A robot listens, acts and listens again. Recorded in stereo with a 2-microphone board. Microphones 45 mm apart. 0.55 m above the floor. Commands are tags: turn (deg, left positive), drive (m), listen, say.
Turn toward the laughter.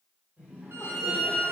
<turn deg="-35"/>
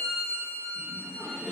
<turn deg="-20"/>
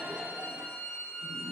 <say>Facing the laughter, 1 to 2 m away.</say>